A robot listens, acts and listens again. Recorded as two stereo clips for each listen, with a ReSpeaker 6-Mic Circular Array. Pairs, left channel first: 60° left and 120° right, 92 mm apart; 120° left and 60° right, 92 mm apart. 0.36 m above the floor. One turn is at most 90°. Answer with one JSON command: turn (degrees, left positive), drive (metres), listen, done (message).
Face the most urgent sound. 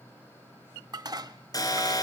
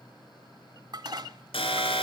{"turn": 90}
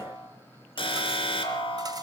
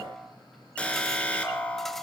{"turn": 45}
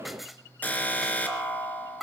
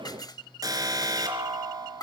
{"turn": -10}
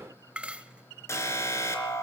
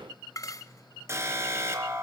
{"done": "Found it: an alarm, straight ahead."}